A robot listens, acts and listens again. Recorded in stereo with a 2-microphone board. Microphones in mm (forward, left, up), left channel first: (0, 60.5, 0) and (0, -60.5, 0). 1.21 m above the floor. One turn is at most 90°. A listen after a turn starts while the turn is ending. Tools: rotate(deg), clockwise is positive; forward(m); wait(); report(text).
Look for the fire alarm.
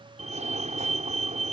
rotate(90)
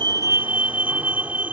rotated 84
rotate(10)
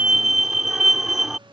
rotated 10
report("Found it: a fire alarm, straight ahead.")